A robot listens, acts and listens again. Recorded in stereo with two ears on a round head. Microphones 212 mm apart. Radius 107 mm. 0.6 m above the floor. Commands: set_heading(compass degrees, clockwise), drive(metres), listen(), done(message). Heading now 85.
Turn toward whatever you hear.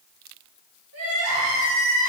set_heading(155)
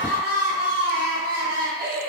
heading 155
set_heading(190)
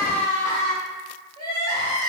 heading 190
set_heading(170)
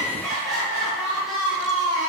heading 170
done("Facing the crying, 1 to 2 m away.")